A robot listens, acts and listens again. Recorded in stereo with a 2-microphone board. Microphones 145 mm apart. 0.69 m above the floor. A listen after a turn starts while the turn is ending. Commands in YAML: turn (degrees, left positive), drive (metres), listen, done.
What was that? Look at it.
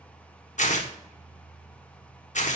turn: 55
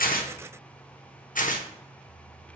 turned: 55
turn: 70
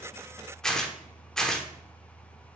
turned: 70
done: "Found it: tearing paper, straight ahead, 1 to 2 m away."